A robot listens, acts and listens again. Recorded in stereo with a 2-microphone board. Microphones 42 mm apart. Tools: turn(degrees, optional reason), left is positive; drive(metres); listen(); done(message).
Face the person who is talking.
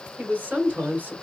turn(degrees=-40, reason="The woman speaking: about 40° right or 140° right.")
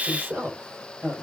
turn(degrees=-115, reason="So it is at 115° right.")
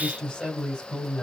turn(degrees=15, reason="The woman speaking is now 15° left.")
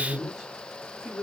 done("Found it: a woman speaking, straight ahead.")